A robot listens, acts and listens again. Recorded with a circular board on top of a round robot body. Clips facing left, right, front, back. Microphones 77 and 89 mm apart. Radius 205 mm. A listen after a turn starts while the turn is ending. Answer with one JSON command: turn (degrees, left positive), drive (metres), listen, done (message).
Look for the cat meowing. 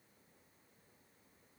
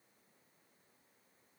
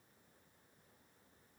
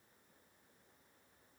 {"listen": true}
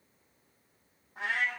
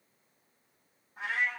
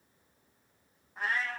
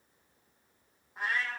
{"turn": 95}
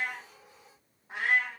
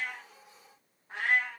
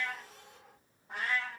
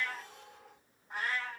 {"turn": 10}
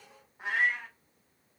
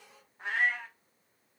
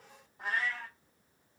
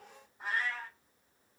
{"done": "Facing the cat meowing."}